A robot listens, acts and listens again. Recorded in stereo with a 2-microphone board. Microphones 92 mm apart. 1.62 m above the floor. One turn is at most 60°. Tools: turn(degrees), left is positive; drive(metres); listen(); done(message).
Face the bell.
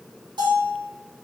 turn(degrees=-50)
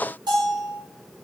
turn(degrees=-60)
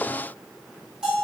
turn(degrees=-10)
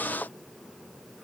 listen()
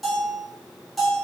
done("Found it: a bell, straight ahead, 1 to 2 m away.")